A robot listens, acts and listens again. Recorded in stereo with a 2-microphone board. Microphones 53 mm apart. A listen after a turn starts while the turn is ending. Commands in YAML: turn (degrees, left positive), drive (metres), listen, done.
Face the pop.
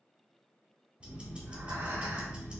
listen: true
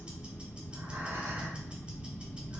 listen: true
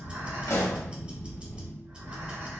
turn: 90
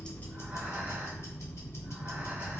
done: "Facing where the pop came from. I can't hear it now."